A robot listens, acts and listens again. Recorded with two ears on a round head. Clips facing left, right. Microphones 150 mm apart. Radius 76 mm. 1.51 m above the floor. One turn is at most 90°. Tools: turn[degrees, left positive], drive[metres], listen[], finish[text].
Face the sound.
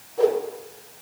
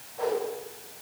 Action: turn[90]
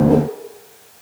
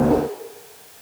Action: listen[]
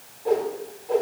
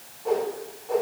Action: finish[Found it: a whoosh, straight ahead.]